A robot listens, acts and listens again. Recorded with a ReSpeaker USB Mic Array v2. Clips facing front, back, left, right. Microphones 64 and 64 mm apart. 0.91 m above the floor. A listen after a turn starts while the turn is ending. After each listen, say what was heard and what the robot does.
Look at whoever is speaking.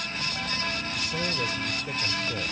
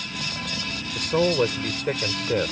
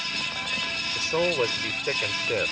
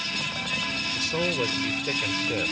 The man speaking: 155° left. Turn 155° left.
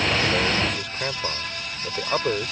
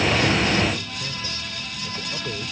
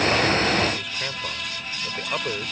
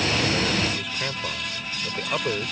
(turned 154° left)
Found it: a man speaking, straight ahead.